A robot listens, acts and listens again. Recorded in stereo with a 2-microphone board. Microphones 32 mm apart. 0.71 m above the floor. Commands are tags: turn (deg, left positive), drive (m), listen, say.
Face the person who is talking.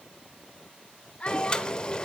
<turn deg="40"/>
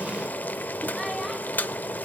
<listen/>
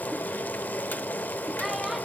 <listen/>
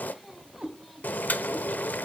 <say>Facing the child speaking.</say>